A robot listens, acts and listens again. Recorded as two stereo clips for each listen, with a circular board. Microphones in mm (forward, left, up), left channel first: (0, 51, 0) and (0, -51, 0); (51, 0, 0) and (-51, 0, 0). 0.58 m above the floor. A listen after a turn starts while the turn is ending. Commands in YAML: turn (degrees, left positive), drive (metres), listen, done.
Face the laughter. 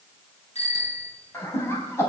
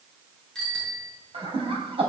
turn: 155
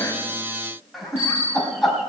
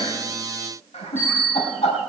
done: "Found it: laughter, straight ahead."